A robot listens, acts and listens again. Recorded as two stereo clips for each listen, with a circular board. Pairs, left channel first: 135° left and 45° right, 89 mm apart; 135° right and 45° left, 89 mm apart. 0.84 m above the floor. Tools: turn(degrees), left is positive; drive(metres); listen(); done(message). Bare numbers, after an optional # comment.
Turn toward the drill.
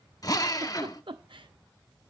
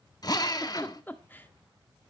# The drill: 175° right.
turn(-175)
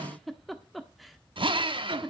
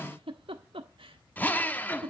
# The drill is now 65° right.
turn(-65)
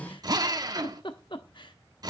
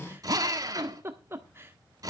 done("Facing the drill.")